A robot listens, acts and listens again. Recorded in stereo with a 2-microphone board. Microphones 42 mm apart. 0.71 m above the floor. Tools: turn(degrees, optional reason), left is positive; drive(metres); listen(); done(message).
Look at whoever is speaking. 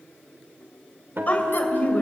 turn(degrees=40, reason="The woman speaking: about 40° left or 140° left.")
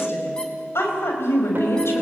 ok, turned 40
turn(degrees=100, reason="So it is at 100° left.")
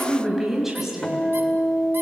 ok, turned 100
done("Found it: a woman speaking, straight ahead.")